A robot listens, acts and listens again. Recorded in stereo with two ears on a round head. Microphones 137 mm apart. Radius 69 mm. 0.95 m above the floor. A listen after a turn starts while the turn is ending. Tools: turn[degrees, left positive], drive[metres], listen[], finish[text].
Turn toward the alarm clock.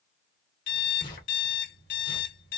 Thought: The alarm clock: about 70° left or 110° left.
Action: turn[70]
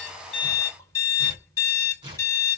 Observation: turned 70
Thought: So it is at 25° left.
Action: turn[25]
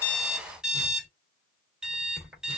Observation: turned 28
Action: finish[Facing the alarm clock.]